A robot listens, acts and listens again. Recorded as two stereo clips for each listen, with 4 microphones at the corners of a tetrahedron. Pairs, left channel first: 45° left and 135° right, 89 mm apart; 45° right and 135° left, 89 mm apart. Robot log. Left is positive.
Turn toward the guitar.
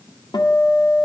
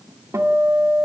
note: The guitar: 80° left.
cmd yaw +80
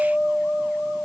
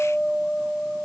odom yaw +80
end: Facing the guitar, 1 to 2 m away.